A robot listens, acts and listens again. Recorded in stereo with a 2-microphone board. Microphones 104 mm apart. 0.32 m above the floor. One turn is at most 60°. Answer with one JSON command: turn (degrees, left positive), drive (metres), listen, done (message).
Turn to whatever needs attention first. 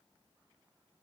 {"listen": true}
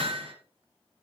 {"listen": true}
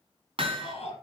{"turn": 60}
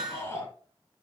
{"turn": 35}
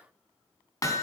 {"listen": true}
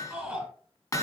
{"done": "Facing the shout."}